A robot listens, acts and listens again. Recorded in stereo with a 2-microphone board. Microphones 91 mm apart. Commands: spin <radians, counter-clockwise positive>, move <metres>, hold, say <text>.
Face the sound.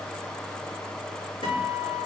spin 1.57
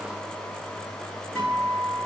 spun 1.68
say Facing the guitar, 2 to 4 m away.